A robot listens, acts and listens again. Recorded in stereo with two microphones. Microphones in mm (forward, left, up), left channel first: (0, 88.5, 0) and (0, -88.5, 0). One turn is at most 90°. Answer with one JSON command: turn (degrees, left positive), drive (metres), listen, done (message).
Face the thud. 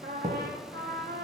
{"turn": -20}
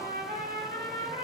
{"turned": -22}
{"listen": true}
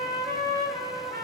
{"done": "I heard a thud, but can't make it out now. It was about straight ahead or 135° right."}